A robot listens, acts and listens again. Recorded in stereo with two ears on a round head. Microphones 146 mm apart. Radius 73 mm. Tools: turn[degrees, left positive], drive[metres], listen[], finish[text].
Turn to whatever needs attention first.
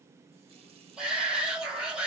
Action: turn[-30]
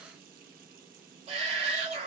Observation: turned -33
Thought: So it is at 145° right.
Action: turn[-145]
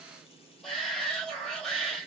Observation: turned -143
Action: finish[Facing the shout, 2 to 4 m away.]